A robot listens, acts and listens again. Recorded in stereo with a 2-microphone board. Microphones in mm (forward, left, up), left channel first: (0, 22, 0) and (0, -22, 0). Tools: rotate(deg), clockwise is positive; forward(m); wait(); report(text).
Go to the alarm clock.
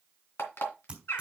rotate(-65)
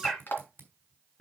rotate(-50)
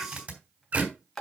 forward(1.0)
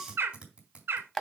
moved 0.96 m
forward(1.0)
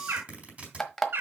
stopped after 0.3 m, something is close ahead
report("I am next to the alarm clock.")